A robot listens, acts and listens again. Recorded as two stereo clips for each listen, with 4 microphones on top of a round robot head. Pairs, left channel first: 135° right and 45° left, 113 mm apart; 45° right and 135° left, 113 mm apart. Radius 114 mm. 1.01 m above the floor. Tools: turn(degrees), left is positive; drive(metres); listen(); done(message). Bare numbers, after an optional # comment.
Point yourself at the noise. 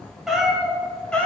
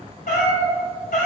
# The cat meowing: 55° right.
turn(-55)
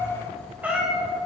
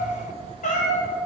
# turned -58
# The cat meowing is now 45° right.
turn(-45)
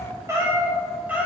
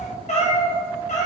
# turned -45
# The cat meowing is now 35° right.
turn(-35)
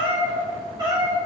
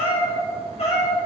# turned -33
# The cat meowing is now 15° right.
turn(-15)
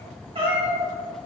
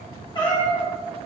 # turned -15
done("Found it: a cat meowing, straight ahead.")